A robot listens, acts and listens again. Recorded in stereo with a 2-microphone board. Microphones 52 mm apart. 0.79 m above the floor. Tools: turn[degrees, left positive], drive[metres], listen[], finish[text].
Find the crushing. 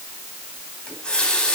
Action: listen[]
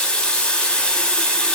Action: listen[]
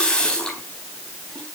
Action: finish[I can't make out crushing to turn to.]